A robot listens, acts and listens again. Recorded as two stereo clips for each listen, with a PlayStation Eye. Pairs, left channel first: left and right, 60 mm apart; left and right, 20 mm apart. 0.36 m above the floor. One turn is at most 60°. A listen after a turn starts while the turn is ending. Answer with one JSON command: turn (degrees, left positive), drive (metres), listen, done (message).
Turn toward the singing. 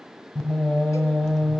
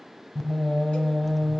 {"turn": 30}
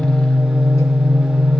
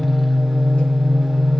{"turn": -10}
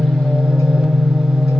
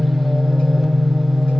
{"done": "Found it: singing, straight ahead, 1 to 2 m away."}